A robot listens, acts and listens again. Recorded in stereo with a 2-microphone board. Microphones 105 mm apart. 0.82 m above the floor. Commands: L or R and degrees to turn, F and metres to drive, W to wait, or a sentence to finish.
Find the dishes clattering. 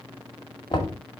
W
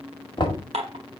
R90
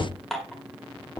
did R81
Facing the dishes clattering.